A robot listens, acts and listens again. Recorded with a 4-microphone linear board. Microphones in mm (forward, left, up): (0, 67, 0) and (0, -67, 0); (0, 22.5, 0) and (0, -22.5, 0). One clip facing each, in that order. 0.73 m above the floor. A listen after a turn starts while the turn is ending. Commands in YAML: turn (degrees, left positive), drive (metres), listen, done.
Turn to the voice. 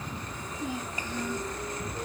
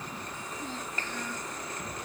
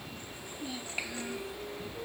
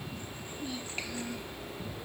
turn: 30
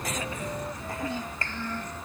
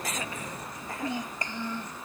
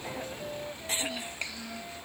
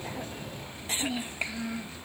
turn: -15
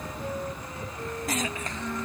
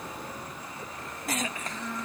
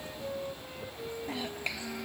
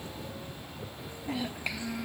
done: "Found it: a child speaking, straight ahead."